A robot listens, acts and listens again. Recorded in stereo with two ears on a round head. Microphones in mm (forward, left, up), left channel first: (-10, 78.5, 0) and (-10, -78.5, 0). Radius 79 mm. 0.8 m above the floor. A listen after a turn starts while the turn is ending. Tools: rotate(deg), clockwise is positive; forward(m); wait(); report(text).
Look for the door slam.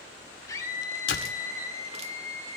rotate(-90)
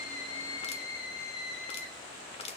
report("I heard a door slam from this way, but can't make it out now.")